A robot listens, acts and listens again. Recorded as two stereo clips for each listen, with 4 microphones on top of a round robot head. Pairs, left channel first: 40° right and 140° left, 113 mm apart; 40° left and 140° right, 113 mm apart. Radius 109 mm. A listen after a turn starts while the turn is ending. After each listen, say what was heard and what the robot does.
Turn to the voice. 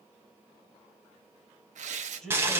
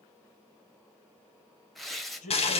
The man speaking: 40° left. Turn 40° left.
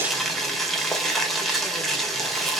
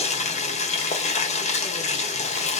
Keep listening.
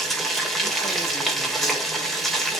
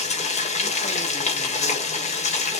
Keep listening.
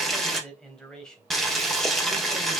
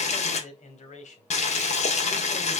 The man speaking is now 40° left. Turn 40° left.
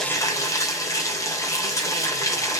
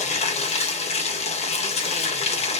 Keep listening.
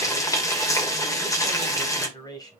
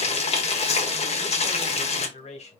The man speaking is now 15° left. Turn 15° left.
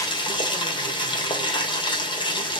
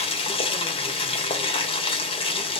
Keep listening.
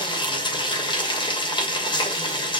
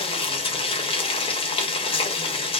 Keep listening.
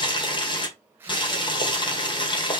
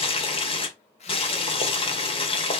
I heard a man speaking from this way, but can't make it out now.